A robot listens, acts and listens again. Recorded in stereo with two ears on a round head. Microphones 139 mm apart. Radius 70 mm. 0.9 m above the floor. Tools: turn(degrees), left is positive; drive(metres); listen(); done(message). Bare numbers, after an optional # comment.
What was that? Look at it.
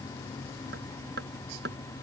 # The hammering: about 70° right or 110° right.
turn(-70)
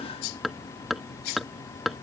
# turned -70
done("Facing the hammering.")